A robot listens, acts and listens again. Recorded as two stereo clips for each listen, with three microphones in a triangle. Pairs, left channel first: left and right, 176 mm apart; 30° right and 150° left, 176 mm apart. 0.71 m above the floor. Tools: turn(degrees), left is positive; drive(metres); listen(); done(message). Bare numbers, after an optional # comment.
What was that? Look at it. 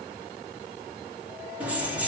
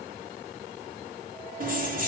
# The keys jangling: 170° right.
turn(-170)
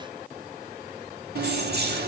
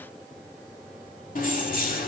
# The keys jangling is now 70° right.
turn(-70)
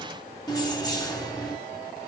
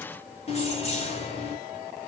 # The keys jangling is now 20° left.
turn(20)
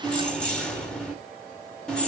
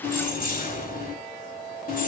done("Found it: keys jangling, straight ahead.")